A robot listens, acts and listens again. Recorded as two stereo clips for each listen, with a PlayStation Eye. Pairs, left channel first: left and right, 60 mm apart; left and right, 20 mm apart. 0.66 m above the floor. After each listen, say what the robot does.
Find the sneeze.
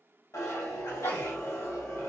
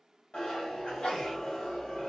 Turn 55° left.
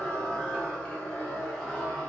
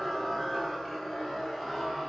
Keep listening.
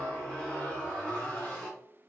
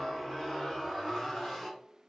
I heard a sneeze, but can't make it out now. It was about straight ahead or 70° left.